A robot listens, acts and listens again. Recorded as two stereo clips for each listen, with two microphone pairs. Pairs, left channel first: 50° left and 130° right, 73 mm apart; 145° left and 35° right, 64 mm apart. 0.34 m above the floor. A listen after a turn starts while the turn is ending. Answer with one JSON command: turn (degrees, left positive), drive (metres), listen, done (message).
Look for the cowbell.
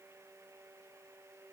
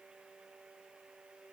{"listen": true}
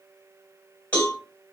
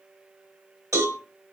{"turn": -15}
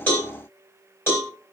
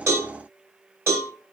{"done": "Facing the cowbell."}